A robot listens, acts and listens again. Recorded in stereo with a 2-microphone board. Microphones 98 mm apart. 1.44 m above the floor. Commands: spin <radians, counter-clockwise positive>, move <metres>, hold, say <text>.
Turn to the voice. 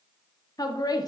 spin 0.70
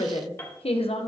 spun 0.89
spin 1.57
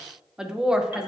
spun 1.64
spin -0.17
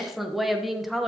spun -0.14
say Found it: a woman speaking, straight ahead, under 1 m away.